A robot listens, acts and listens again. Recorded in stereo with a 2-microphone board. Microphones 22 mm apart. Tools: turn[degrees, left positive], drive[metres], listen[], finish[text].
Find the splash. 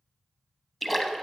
Action: turn[30]
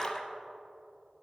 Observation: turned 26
Thought: So it is at 150° left.
Action: turn[150]
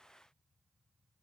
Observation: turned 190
Thought: Nothing new. It was at 40° right.
Action: turn[-40]
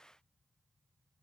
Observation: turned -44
Action: finish[Facing where the splash came from. I can't hear it now.]